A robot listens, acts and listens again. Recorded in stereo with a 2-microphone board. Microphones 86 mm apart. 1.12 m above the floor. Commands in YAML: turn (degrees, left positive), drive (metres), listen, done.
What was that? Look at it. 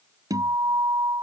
turn: -45
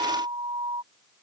turn: -85
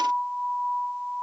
done: "Facing the guitar."